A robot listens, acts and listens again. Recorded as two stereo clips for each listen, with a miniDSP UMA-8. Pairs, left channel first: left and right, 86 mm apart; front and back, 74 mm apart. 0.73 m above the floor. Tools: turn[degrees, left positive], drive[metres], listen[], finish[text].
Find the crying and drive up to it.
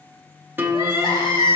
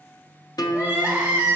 Thought: The crying: 110° left.
Action: turn[110]
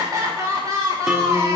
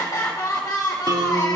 Thought: The crying is now 40° right.
Action: turn[-40]
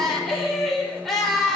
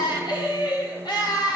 Action: drive[1.0]
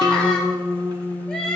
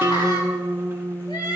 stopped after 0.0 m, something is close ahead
Thought: The crying is now 10° left.
Action: turn[10]
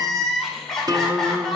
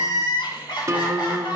Action: finish[Blocked. The crying is further on, straight ahead.]